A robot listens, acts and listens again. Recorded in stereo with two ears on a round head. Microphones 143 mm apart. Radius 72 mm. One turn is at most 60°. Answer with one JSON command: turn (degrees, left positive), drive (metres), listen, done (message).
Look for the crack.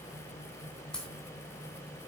{"turn": 30}
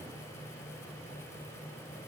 {"listen": true}
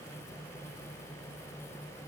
{"done": "I heard a crack, but can't make it out now. It was about 25° right or 145° left."}